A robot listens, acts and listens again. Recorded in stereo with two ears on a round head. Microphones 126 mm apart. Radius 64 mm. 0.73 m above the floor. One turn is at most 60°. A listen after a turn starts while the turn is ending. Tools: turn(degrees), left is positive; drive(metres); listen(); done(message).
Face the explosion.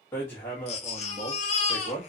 listen()
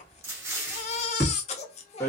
turn(degrees=-20)
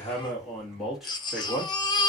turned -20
listen()
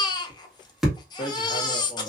done("I heard an explosion, but can't make it out now. It was about straight ahead or 140° right.")